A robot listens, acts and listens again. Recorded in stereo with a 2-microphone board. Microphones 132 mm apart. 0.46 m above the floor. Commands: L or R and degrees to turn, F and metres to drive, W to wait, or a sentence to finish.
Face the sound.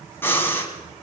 L15
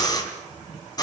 L150
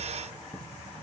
W
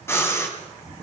L20
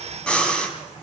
Facing the breathing.